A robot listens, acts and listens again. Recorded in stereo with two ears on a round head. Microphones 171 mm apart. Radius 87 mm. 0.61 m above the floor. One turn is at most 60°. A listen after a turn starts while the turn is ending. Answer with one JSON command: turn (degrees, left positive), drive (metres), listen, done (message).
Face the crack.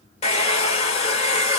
{"listen": true}
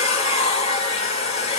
{"listen": true}
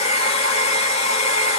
{"done": "I can't make out a crack to turn to."}